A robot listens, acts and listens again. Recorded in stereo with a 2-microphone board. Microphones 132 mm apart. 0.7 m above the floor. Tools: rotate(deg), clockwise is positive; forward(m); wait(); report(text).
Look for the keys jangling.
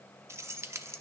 rotate(20)
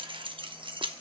rotate(140)
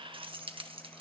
rotate(45)
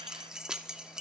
report("Facing the keys jangling.")